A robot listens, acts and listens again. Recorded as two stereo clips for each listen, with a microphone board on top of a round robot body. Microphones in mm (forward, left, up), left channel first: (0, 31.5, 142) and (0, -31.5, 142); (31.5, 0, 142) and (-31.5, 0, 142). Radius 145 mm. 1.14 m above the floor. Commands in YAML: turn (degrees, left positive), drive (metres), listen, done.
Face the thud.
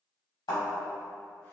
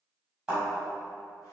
turn: 110
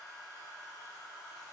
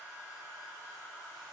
done: "I heard a thud from this way, but can't make it out now."